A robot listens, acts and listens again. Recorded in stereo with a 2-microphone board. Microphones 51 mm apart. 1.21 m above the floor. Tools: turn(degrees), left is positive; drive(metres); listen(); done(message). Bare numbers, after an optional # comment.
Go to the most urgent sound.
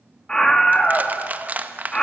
turn(30)
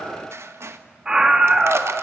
# So it is at 15° right.
turn(-15)
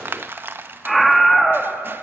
drive(1.0)
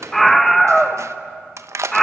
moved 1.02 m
drive(1.0)
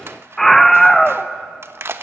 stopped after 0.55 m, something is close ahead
done("I am next to the scream.")